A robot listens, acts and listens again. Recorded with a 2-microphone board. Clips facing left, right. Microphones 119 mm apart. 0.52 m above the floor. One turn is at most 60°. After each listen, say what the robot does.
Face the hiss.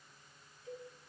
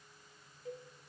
Keep listening.
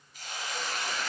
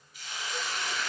Turn 45° left.
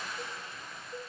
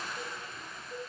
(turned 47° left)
Found it: a hiss, straight ahead.